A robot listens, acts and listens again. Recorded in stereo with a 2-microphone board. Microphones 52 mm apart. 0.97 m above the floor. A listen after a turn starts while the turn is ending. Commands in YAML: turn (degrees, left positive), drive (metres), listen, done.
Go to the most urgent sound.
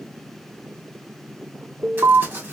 turn: -90
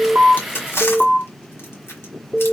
drive: 1.0
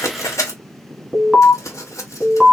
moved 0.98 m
drive: 1.0
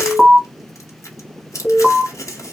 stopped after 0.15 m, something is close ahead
done: "Arrived at the alarm, straight ahead."